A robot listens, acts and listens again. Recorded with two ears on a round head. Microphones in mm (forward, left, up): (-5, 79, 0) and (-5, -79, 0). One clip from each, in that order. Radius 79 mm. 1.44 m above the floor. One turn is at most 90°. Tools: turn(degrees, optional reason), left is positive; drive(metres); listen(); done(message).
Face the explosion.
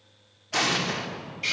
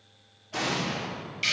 turn(degrees=45, reason="The explosion: about 45° left or 135° left.")
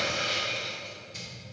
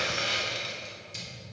listen()
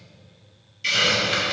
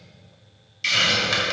done("I heard an explosion, but can't make it out now. It was about straight ahead or 90° left.")